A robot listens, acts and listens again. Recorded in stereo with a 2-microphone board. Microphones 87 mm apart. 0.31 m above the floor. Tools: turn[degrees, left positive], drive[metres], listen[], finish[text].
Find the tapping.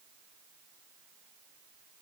Action: listen[]
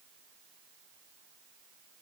Action: listen[]
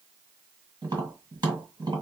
Thought: The tapping: about 50° right or 130° right.
Action: turn[-50]
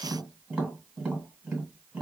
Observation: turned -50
Thought: So it is at 10° right.
Action: turn[-10]
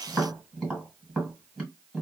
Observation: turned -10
Action: finish[Found it: tapping, straight ahead.]